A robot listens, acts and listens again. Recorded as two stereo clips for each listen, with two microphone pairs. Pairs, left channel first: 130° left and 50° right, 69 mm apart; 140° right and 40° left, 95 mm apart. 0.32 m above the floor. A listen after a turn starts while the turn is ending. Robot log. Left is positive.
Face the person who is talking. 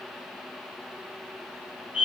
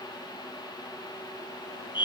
cmd idle
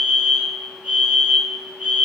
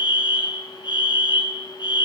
cmd idle
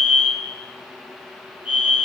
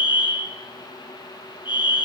end: I can't make out anyone speaking to turn to.